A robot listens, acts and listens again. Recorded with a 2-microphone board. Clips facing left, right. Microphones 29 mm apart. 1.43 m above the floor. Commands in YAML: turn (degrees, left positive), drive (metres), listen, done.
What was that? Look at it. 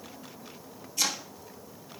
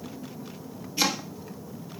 turn: -25
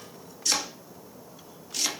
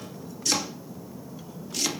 done: "Found it: chopping, straight ahead, 2 to 4 m away."